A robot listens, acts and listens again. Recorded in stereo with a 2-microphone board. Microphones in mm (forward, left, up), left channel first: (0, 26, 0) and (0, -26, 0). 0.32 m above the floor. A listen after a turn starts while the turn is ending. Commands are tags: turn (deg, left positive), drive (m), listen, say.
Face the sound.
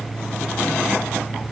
<listen/>
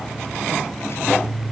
<listen/>
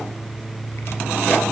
<say>I can't make out anything.</say>